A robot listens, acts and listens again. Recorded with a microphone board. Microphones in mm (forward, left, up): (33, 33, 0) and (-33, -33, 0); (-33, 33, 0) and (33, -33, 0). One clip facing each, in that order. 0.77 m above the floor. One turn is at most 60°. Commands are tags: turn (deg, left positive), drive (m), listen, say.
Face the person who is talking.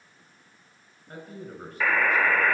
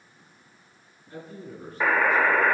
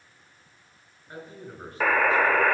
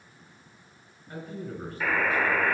<turn deg="60"/>
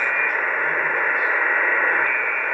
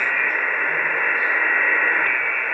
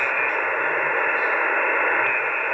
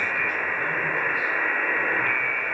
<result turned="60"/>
<listen/>
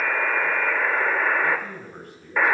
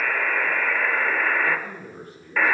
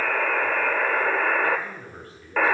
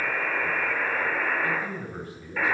<turn deg="25"/>
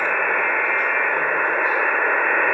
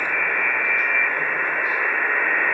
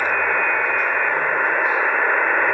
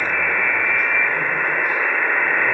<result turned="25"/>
<listen/>
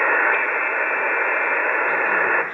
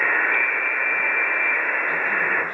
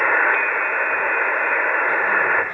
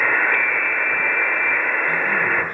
<listen/>
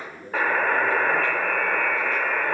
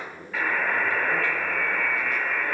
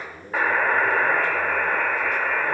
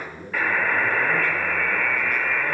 <turn deg="-10"/>
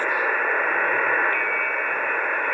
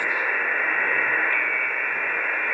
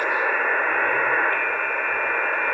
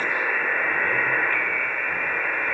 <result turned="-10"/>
<listen/>
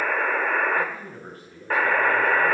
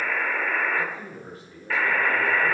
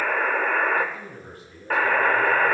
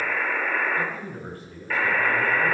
<say>Facing the man speaking.</say>